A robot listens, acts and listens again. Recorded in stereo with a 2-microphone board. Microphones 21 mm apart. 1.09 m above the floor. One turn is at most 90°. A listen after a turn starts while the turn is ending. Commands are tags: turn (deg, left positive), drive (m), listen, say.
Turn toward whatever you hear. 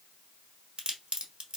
<turn deg="-50"/>
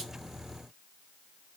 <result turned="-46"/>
<listen/>
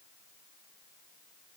<say>I heard a crack, but can't make it out now. It was about 5° right or 80° right.</say>